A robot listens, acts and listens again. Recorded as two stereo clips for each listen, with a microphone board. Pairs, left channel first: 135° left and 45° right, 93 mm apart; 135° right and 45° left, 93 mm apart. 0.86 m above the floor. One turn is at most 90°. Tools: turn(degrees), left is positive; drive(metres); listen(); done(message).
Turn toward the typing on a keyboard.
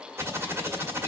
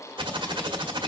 turn(degrees=15)
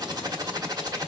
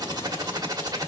done("Facing the typing on a keyboard, 1 to 2 m away.")